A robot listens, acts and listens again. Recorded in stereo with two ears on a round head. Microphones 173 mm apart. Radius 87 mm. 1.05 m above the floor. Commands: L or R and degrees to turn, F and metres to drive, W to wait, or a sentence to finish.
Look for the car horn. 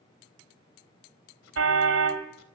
R90
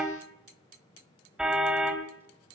Found it: a car horn, straight ahead, 2 to 4 m away.